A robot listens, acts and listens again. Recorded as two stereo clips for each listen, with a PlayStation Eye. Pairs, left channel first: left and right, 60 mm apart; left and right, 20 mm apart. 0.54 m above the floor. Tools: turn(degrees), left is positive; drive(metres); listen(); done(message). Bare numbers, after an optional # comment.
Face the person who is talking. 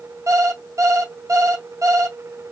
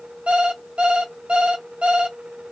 listen()
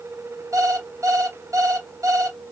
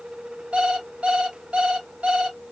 listen()
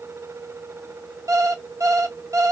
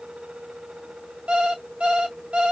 done("I can't make out anyone speaking, only an alarm clock.")